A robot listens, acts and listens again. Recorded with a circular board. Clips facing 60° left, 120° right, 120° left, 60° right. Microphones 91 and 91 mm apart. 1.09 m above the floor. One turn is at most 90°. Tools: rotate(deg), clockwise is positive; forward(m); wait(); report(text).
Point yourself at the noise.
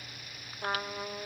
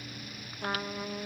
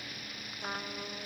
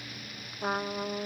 rotate(15)
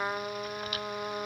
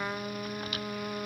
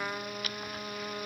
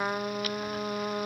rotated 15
report("Facing the trumpet, under 1 m away.")